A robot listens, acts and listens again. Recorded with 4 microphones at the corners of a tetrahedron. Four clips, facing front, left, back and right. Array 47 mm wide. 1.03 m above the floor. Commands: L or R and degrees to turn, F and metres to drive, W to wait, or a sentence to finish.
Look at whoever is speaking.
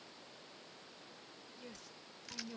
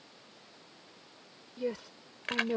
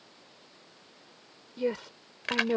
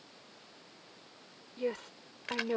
R160
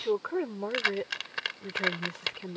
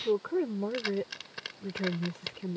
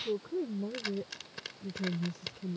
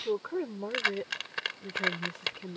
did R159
Facing the woman speaking.